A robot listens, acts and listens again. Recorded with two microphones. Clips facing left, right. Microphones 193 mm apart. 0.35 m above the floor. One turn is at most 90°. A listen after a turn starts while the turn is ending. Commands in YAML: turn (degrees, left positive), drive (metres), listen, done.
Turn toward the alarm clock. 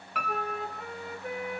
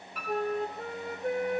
listen: true
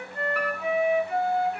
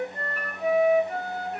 listen: true
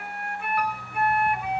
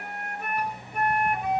turn: -30
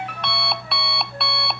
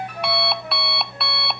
done: "Found it: an alarm clock, straight ahead."